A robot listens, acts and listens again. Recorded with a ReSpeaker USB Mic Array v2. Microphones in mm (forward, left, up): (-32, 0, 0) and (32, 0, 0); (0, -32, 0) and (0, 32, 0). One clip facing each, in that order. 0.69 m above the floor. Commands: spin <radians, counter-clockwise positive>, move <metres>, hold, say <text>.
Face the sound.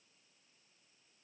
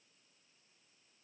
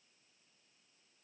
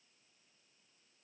hold
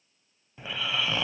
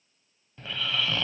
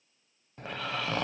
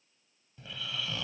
spin -1.83
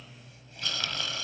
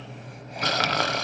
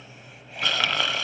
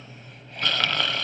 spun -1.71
spin -0.17
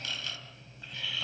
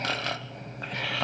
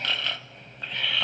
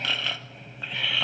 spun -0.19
say Facing the snoring, under 1 m away.